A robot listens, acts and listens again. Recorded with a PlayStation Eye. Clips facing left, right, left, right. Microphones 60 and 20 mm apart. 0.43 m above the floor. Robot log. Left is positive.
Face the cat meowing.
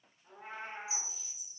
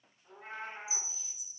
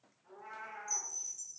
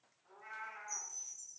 cmd yaw +30
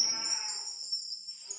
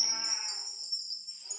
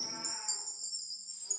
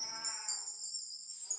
cmd idle
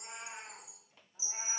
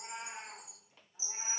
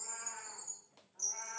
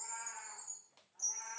end: Found it: a cat meowing, straight ahead, over 4 m away.